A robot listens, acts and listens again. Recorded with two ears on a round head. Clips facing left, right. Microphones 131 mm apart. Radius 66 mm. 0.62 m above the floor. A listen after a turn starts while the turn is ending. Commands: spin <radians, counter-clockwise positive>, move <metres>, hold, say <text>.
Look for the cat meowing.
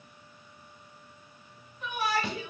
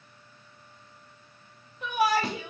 hold
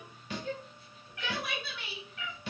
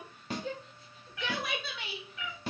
spin -1.57
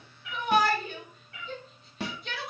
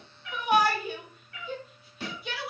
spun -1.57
spin 0.44
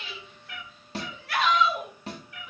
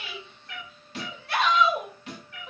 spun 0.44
say Facing the cat meowing, 1 to 2 m away.